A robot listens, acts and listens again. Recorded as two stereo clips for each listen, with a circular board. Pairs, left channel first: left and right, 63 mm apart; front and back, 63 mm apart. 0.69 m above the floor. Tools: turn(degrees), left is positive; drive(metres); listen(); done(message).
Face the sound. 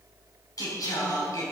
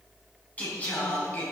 turn(degrees=65)
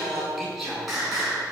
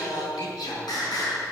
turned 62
done("Found it: singing, straight ahead.")